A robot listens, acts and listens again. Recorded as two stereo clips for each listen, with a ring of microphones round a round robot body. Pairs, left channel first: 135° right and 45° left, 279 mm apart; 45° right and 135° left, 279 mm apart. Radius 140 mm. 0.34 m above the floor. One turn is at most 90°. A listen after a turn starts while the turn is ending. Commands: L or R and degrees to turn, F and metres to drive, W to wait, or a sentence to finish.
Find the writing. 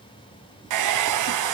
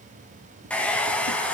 W
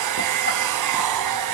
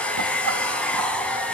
W
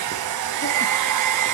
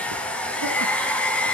I can't make out writing, only a hair dryer.